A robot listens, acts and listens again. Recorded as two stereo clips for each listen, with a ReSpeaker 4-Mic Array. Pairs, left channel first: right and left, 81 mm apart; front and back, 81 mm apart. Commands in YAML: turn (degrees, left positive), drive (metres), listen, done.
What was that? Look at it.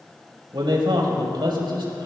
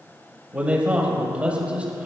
turn: 105
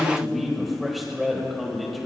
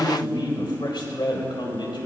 done: "Found it: a man speaking, straight ahead, over 4 m away."